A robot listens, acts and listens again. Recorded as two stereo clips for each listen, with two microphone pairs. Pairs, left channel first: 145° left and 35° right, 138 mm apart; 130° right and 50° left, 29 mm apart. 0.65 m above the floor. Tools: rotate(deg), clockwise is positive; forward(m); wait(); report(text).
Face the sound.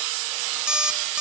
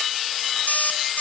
rotate(120)
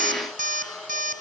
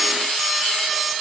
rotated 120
wait()
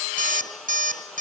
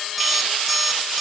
rotate(35)
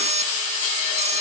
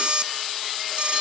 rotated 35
report("Facing the alarm clock, 2 to 4 m away.")